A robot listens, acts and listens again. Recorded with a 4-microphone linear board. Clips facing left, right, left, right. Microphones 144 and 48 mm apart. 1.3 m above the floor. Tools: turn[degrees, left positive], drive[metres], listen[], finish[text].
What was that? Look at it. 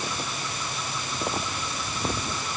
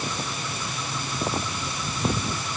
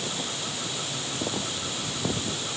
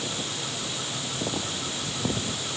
Action: listen[]
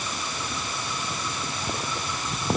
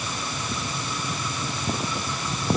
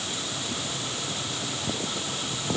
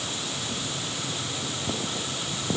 Action: listen[]
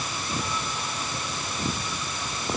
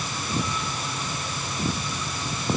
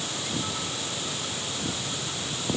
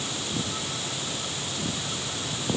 Action: finish[I can't make out anything to turn to.]